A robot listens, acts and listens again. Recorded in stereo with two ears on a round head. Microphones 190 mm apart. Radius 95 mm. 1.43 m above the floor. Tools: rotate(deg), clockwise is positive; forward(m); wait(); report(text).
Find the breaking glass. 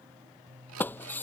rotate(-30)
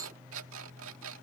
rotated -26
wait()
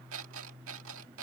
report("I heard breaking glass, but can't make it out now. It was about 15° right or 145° left.")